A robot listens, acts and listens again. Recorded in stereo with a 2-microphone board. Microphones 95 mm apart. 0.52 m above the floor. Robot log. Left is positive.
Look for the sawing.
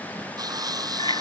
note: The sawing: about 45° right or 135° right.
cmd yaw -45
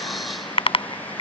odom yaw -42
cmd idle
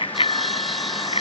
cmd idle
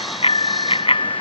end: I heard sawing, but can't make it out now. It was about straight ahead or 95° right.